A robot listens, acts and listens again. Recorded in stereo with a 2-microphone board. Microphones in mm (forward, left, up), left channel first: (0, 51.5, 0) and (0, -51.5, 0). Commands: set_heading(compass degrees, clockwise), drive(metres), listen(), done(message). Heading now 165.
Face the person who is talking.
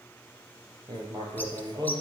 listen()
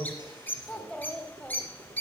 set_heading(135)
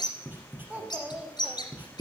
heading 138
set_heading(158)
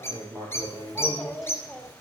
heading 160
done("Facing the child speaking, 1 to 2 m away.")